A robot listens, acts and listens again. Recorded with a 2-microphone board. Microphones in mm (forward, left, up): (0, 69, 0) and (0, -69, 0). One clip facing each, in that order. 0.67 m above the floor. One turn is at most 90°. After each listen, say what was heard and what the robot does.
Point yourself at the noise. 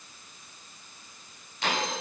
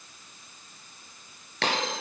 Turn 90° right.
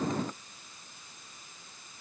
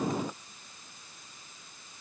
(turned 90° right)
I heard a dropped coin from this way, but can't make it out now.